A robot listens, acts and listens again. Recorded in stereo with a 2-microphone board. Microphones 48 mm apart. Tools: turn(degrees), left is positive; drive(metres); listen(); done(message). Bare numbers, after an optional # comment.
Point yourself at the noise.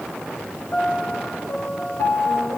# The piano: about 65° left or 115° left.
turn(65)
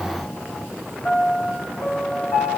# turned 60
# So it is at 55° left.
turn(55)
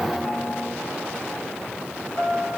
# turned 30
# The piano is now 25° left.
turn(25)
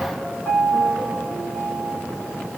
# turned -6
# The piano is now 30° left.
turn(30)
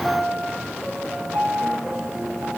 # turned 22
# The piano is now 10° left.
turn(10)
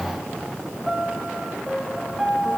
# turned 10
done("Found it: a piano, straight ahead.")